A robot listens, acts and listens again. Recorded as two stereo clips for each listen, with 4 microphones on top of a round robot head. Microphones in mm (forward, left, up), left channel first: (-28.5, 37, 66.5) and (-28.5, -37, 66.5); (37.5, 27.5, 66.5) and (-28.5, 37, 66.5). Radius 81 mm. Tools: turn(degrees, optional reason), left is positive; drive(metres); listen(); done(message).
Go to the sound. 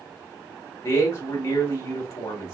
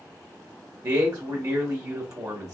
turn(degrees=140, reason="The man speaking: 140° left.")
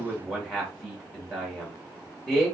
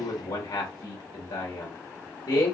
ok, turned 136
drive(metres=1.0)
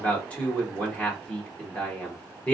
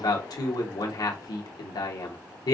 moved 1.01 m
turn(degrees=15, reason="The man speaking is now 15° left.")
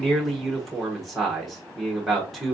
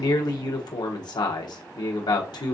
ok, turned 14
drive(metres=1.0)
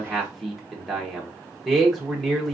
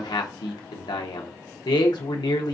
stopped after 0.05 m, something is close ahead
done("Arrived at the man speaking, straight ahead.")